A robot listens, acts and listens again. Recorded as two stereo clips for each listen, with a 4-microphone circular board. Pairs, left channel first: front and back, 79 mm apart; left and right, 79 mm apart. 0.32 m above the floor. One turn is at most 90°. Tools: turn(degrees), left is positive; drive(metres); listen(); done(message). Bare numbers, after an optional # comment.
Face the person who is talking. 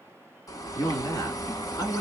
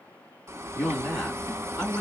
done("Facing the man speaking.")